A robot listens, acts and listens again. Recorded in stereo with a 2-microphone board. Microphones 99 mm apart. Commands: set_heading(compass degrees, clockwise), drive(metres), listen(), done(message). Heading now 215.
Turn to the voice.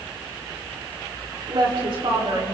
set_heading(275)
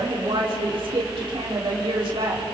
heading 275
set_heading(335)
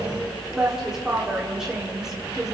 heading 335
done("Facing the woman speaking, over 4 m away.")